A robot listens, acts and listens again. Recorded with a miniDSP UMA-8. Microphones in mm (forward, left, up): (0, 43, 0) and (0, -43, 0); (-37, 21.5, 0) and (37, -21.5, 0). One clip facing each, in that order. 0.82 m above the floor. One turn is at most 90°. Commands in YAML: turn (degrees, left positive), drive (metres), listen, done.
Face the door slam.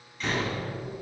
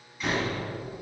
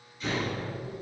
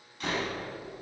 done: "Facing the door slam."